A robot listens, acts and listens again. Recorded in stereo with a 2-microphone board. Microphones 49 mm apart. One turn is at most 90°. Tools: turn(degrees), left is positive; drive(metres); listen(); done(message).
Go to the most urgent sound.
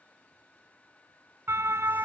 turn(degrees=-60)
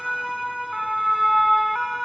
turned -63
drive(metres=1.0)
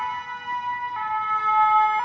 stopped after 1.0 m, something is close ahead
done("Something is in my way. I am facing the siren but have not reached it.")